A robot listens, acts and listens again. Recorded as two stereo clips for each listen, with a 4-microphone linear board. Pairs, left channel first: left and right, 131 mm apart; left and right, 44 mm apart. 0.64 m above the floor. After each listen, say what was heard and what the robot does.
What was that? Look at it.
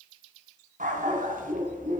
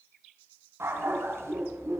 Turn 90° right.
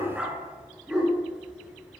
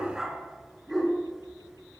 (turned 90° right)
Found it: a dog barking, straight ahead.